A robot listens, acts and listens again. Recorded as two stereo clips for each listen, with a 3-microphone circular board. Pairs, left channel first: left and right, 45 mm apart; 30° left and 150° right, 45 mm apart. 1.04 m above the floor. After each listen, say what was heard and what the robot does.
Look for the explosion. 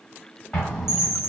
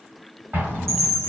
The explosion: 165° left. Turn 165° left.
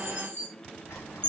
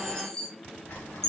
I heard an explosion from this way, but can't make it out now.